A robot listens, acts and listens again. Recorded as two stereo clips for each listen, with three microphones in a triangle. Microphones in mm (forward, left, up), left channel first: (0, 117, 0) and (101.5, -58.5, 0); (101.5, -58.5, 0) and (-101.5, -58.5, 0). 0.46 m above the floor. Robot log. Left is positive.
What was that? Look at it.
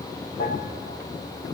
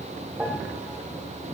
note: The piano: 100° left.
cmd yaw +100
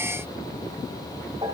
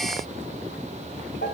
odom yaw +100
end: Found it: a piano, straight ahead, 2 to 4 m away.